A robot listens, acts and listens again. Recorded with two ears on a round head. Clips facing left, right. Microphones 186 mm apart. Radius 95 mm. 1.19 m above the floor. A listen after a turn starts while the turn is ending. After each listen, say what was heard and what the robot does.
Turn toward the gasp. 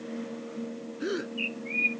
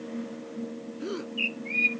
The gasp: about 15° left or 165° left. Turn 15° left.
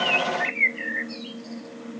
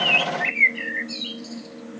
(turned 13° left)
Keep listening.
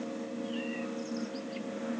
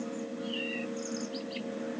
I heard a gasp, but can't make it out now. It was about 5° left or 150° left.